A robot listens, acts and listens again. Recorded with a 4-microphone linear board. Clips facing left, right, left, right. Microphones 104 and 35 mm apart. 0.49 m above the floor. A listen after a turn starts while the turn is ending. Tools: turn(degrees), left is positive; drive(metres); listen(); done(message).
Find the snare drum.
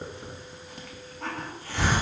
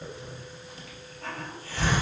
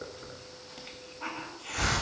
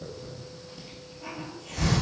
listen()
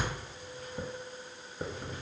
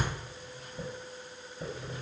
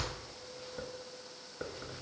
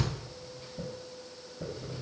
listen()
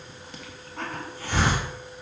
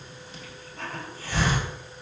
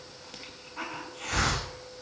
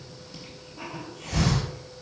done("I can't make out a snare drum, only a hiss.")